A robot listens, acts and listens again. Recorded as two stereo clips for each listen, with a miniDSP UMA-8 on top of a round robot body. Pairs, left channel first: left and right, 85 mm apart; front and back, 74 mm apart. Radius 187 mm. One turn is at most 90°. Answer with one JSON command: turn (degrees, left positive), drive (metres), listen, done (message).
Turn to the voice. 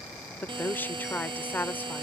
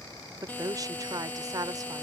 {"turn": 90}
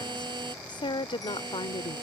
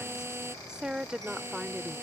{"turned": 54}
{"turn": 90}
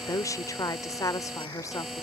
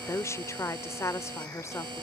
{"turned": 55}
{"turn": 45}
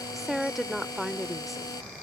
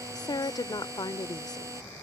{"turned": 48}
{"done": "Found it: a woman speaking, straight ahead."}